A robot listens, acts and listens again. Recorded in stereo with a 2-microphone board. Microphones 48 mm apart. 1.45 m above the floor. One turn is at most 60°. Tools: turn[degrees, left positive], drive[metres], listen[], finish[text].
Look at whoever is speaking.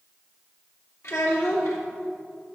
Action: turn[60]
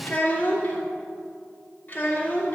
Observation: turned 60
Thought: So it is at 40° left.
Action: turn[40]
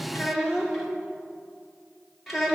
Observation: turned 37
Action: finish[Facing the child speaking, 2 to 4 m away.]